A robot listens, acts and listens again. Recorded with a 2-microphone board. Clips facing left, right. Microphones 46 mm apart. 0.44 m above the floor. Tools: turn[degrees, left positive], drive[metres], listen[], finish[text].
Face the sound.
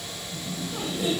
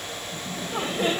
Thought: The laughter: about 50° right or 130° right.
Action: turn[-50]
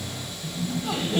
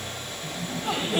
Thought: So it is at 20° right.
Action: turn[-20]
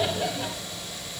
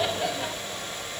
Action: finish[Facing the laughter, 2 to 4 m away.]